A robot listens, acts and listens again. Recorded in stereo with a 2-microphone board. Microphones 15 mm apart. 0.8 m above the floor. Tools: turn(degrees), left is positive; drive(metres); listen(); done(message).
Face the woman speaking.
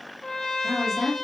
turn(degrees=-25)
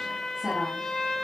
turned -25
listen()
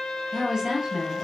turn(degrees=-140)
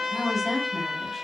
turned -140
turn(degrees=-10)
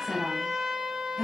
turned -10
done("Facing the woman speaking.")